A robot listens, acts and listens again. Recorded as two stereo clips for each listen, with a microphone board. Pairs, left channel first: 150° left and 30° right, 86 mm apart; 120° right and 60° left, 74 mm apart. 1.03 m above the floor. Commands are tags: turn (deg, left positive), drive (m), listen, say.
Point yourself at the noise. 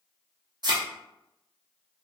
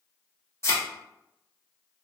<turn deg="-70"/>
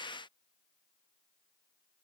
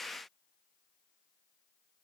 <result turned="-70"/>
<say>Facing where the thud came from. I can't hear it now.</say>